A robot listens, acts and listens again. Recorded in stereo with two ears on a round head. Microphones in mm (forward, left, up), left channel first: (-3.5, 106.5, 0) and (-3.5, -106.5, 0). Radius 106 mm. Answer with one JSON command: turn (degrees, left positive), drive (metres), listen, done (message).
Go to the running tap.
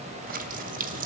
{"turn": -35}
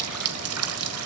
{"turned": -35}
{"turn": -110}
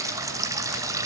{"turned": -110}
{"turn": -15}
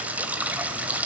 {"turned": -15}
{"drive": 1.0}
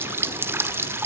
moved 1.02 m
{"turn": -10}
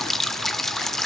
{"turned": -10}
{"drive": 1.0}
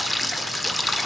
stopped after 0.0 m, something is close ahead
{"done": "I am next to the running tap."}